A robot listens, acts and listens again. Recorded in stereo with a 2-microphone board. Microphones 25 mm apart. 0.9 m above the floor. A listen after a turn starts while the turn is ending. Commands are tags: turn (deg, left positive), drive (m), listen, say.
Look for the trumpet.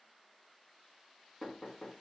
<listen/>
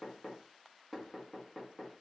<listen/>
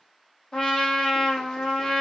<turn deg="40"/>
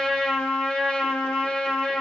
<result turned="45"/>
<turn deg="95"/>
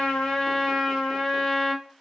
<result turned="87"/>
<turn deg="10"/>
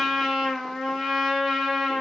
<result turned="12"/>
<say>Facing the trumpet.</say>